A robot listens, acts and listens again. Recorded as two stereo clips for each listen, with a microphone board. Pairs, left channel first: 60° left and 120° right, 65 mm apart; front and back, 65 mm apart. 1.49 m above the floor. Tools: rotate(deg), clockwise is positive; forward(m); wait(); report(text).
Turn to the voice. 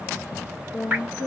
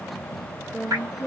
rotate(-90)
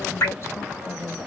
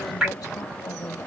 rotate(-15)
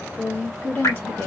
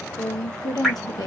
report("Found it: a woman speaking, straight ahead.")